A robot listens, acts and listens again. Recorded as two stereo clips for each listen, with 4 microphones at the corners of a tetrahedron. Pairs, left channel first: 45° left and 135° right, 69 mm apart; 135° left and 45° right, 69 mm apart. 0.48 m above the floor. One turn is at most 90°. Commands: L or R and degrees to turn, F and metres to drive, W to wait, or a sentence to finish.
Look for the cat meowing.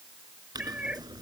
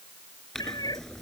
L90
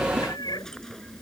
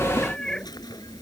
L55
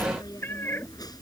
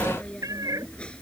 R10
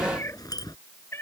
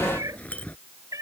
R10
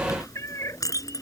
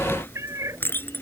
Facing the cat meowing.